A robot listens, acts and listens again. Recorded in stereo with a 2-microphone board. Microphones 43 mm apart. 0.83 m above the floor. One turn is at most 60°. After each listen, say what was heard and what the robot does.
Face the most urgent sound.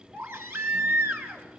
Turn 60° right.
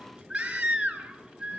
So it is at 25° right. Turn 25° right.
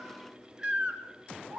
The baby crying is now 15° right. Turn 15° right.
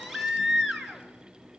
Found it: a baby crying, straight ahead.